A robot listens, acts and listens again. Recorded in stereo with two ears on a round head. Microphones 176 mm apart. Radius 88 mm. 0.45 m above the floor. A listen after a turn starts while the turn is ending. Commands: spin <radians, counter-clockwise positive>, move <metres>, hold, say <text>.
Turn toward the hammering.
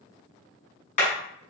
spin 0.70
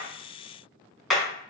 say Facing the hammering.